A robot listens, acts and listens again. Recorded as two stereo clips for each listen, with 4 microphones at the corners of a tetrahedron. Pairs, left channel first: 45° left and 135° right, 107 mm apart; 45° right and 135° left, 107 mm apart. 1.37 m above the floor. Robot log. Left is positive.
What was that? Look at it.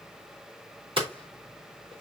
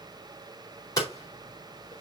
note: The hammering: 100° right.
cmd yaw -100
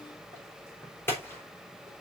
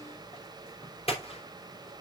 note: The hammering is now 25° right.
cmd yaw -25
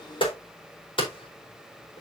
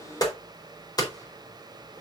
end: Found it: hammering, straight ahead.